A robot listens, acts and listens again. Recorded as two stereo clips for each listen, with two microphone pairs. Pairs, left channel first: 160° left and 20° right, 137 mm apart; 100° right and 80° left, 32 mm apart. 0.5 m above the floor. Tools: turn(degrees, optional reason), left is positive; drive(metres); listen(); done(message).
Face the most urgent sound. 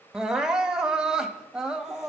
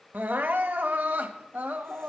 turn(degrees=65, reason="The crying: 65° left.")
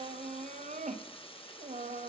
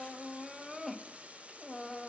done("Found it: crying, straight ahead.")